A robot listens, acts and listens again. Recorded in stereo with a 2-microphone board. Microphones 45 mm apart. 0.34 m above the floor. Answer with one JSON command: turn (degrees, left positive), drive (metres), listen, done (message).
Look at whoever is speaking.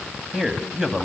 {"turn": -15}
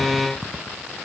{"listen": true}
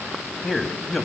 {"done": "Found it: a man speaking, straight ahead, 2 to 4 m away."}